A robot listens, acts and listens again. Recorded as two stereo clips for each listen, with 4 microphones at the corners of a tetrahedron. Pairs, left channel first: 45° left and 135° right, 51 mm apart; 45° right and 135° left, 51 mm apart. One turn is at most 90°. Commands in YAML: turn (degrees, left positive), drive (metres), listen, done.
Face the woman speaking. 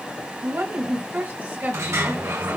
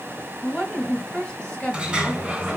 turn: -90
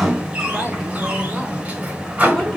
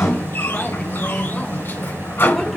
turn: -20
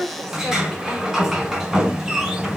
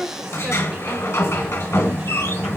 turn: 90
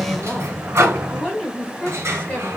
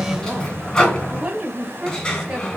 turn: 85
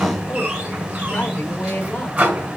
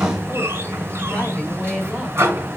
listen: true
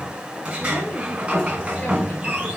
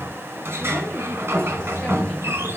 listen: true
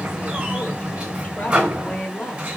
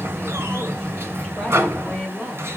done: "Facing the woman speaking."